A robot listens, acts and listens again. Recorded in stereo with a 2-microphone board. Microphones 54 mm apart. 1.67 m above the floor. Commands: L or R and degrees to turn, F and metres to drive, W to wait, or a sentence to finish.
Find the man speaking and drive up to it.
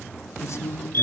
L60
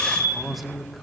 F1.0
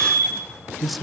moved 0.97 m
F1.0
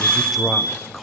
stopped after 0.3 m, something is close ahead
I am next to the man speaking.